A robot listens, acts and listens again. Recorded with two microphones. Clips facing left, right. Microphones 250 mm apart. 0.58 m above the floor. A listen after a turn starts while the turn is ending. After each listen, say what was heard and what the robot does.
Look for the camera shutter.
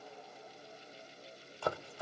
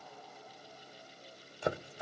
Keep listening.
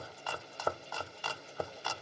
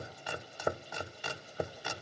Keep listening.
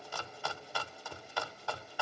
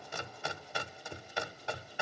I can't make out a camera shutter, only chopping.